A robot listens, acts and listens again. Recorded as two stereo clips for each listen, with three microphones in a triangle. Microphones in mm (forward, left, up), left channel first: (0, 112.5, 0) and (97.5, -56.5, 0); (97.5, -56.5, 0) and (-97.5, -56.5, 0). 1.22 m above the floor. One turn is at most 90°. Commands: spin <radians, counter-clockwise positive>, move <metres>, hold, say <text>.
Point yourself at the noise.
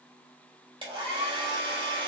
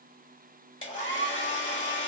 say Found it: a hair dryer, straight ahead.